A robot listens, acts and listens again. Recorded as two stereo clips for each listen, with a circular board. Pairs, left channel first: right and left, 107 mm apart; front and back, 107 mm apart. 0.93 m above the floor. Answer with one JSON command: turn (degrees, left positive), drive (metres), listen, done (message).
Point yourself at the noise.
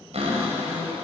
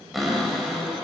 {"turn": 90}
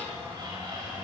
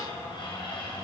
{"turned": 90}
{"turn": 45}
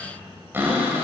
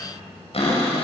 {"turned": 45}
{"turn": 20}
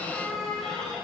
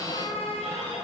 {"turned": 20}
{"done": "Facing the cupboard door."}